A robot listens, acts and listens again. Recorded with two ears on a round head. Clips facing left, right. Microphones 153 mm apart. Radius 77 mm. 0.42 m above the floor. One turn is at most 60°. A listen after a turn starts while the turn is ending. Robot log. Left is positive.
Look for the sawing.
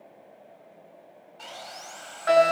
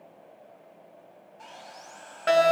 note: The sawing: about 75° left or 105° left.
cmd yaw +60
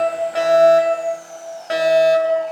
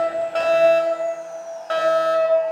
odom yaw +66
cmd idle
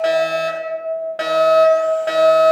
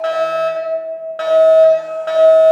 cmd idle
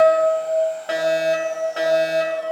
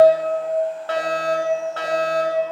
end: I heard sawing, but can't make it out now. It was about 10° left or 40° left.